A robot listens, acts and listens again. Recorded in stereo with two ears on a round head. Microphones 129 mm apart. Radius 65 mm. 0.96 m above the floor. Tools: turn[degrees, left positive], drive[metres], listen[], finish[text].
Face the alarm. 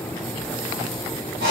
Action: listen[]
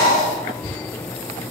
Action: listen[]
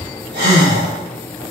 Action: finish[I can't make out an alarm, only breathing.]